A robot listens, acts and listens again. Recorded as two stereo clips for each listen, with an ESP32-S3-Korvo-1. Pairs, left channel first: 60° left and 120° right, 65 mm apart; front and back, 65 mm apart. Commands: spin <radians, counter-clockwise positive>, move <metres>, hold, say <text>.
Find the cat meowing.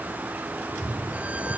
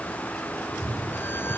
spin 3.14
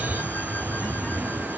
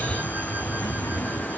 say Facing the cat meowing.